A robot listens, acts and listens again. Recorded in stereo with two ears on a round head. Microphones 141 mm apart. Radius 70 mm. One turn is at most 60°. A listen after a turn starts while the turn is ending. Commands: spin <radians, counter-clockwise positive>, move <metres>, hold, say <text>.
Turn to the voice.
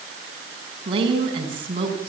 spin -0.61
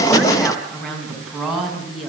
say Facing the woman speaking, over 4 m away.